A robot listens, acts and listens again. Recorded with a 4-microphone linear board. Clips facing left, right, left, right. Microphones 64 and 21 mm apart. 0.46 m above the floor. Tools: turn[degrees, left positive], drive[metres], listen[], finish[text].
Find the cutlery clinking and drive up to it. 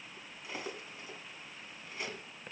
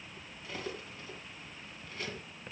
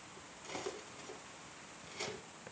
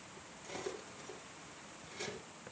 Thought: The cutlery clinking: about 15° left or 165° left.
Action: turn[15]
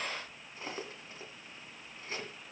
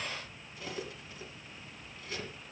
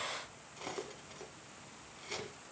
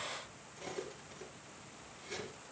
Thought: So it is at 150° left.
Action: turn[150]
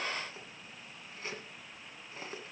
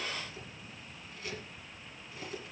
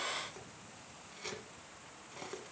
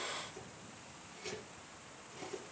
Thought: The cutlery clinking is now 35° left.
Action: turn[35]
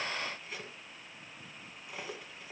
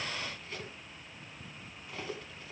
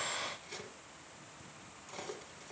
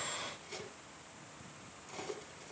Thought: The cutlery clinking is now 10° left.
Action: turn[10]
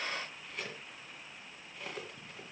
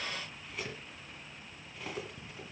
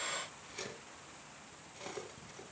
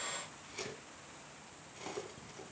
Action: drive[1.0]
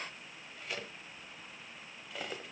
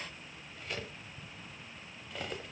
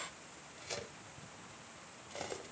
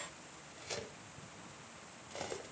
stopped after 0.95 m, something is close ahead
Action: finish[Arrived at the cutlery clinking, straight ahead.]